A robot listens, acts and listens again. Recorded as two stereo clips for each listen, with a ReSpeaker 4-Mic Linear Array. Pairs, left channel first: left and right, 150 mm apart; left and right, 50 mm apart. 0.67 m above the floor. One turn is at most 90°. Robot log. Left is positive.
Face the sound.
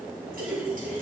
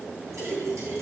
cmd yaw -90
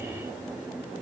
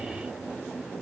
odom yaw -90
end: Facing where the splash came from. I can't hear it now.